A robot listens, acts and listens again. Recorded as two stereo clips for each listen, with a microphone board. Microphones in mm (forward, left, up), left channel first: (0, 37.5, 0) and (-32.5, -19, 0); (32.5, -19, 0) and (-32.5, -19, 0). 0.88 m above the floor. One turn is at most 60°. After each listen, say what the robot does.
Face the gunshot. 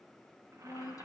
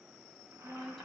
Keep listening.
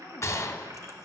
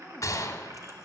Turn 25° left.
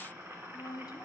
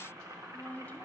Facing where the gunshot came from. I can't hear it now.